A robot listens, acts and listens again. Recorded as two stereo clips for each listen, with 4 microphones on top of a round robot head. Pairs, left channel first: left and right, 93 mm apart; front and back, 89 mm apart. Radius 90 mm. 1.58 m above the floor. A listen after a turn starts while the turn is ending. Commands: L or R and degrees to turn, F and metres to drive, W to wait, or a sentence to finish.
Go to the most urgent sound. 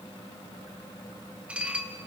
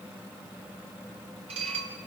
W
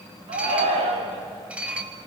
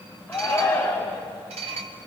R85
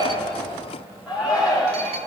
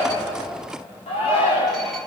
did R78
R10
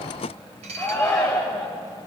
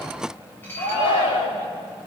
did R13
F1.0
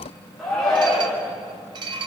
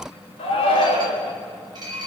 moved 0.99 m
F1.0
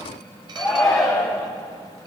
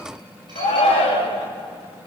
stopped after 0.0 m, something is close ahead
Something is in my way. I am facing the shout but have not reached it.